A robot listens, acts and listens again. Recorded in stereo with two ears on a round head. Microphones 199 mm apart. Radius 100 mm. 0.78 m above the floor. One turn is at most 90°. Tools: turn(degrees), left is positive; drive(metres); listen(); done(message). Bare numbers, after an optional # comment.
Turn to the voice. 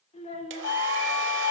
# The child speaking: about 30° left or 150° left.
turn(30)
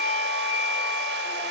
listen()
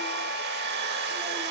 listen()
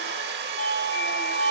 done("I heard a child speaking, but can't make it out now. It was about straight ahead or 120° left.")